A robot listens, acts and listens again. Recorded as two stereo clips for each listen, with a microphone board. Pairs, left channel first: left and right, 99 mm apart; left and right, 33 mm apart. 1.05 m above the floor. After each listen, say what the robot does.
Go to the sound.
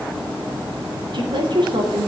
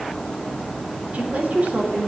Turn 55° right.
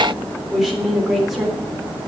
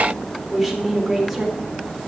Drive 1.0 m forward.
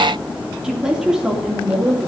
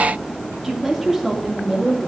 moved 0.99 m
Turn 10° right.
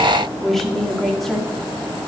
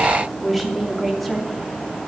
Drive 1.0 m forward.
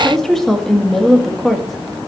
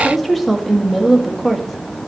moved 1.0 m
Drive 1.0 m forward.
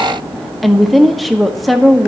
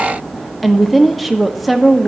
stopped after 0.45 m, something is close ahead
Arrived at the woman speaking, straight ahead.